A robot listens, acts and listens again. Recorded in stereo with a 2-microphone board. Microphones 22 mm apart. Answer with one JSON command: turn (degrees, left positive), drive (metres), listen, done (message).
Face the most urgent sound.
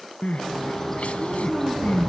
{"turn": 90}
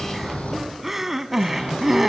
{"turn": -10}
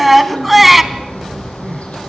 {"done": "Found it: crying, straight ahead, under 1 m away."}